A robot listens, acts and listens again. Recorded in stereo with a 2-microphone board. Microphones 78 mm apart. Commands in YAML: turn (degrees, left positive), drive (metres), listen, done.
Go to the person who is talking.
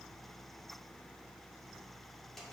listen: true
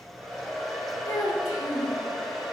turn: 50
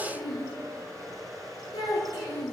turn: 80
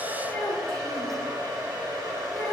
turn: 10
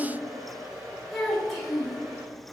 drive: 1.0
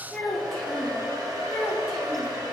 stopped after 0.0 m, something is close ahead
done: "Something is in my way. I am facing the child speaking but have not reached it."